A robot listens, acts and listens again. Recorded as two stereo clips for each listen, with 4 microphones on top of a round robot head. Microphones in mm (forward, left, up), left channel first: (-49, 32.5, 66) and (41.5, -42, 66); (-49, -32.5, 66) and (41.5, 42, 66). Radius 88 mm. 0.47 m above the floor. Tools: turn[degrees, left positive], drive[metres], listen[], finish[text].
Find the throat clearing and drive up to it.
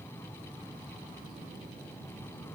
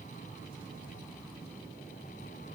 Action: listen[]
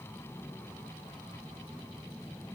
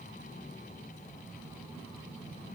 Action: listen[]
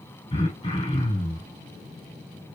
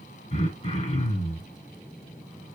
Thought: The throat clearing: 175° right.
Action: turn[-175]
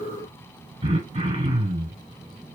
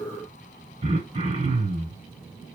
Action: drive[1.0]
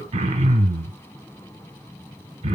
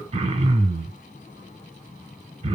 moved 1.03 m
Action: drive[1.0]
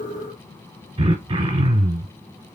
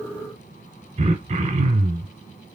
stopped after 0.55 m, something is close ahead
Thought: The throat clearing is now 10° left.
Action: turn[10]
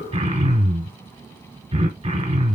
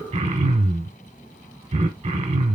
Action: finish[I am next to the throat clearing.]